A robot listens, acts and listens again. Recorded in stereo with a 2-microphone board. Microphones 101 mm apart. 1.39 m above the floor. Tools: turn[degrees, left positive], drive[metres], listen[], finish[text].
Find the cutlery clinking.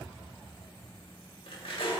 Thought: The cutlery clinking: about 70° left or 110° left.
Action: turn[70]
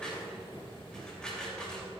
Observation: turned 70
Thought: So it is at 10° left.
Action: turn[10]
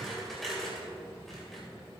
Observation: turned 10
Action: finish[Facing the cutlery clinking.]